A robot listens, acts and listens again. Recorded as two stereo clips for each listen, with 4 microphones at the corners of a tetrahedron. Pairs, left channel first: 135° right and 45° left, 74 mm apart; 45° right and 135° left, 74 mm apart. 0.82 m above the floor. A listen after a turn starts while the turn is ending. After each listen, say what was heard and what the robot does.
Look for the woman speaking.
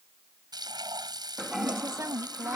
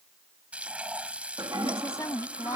Found it: a woman speaking, straight ahead.